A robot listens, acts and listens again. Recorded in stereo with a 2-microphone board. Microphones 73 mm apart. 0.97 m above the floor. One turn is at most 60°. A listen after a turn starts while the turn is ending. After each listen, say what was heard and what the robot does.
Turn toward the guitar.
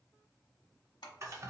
Keep listening.
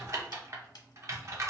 Keep listening.
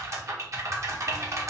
I can't make out a guitar to turn to.